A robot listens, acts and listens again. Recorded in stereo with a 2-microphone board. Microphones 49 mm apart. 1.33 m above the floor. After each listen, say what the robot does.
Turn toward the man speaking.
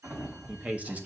Turn 35° right.
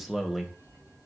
Turn 10° right.
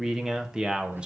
Turn 25° right.
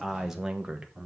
Turn 25° right.
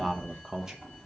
Turn 15° right.
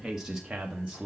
Turn 25° right.
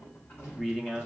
Turn 15° left.
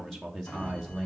Facing the man speaking, 1 to 2 m away.